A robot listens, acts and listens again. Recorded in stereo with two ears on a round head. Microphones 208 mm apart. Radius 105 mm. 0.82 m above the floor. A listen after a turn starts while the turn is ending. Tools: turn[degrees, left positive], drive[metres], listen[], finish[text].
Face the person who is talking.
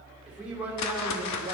Action: turn[-30]
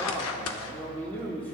Thought: So it is at 10° left.
Action: turn[10]
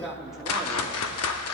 Action: finish[Found it: a man speaking, straight ahead, 1 to 2 m away.]